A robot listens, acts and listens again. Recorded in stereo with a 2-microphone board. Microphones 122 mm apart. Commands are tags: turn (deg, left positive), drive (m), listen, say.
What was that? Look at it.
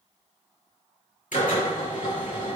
<turn deg="90"/>
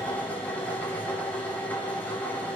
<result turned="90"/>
<turn deg="15"/>
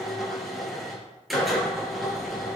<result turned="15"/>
<say>Found it: a drill, straight ahead, over 4 m away.</say>